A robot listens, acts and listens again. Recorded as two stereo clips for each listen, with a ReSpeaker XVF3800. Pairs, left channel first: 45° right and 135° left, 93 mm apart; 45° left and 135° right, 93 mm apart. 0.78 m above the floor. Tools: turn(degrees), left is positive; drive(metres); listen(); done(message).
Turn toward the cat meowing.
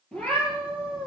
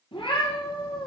turn(degrees=30)
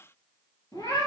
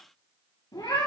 done("Found it: a cat meowing, straight ahead.")